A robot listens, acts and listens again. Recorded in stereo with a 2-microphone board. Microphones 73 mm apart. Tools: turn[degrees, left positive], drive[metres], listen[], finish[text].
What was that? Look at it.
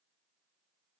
Action: listen[]
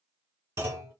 Thought: The clunk: about 40° right or 140° right.
Action: turn[-40]
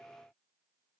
Action: listen[]
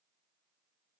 Action: finish[I heard a clunk, but can't make it out now. It was about straight ahead or 100° right.]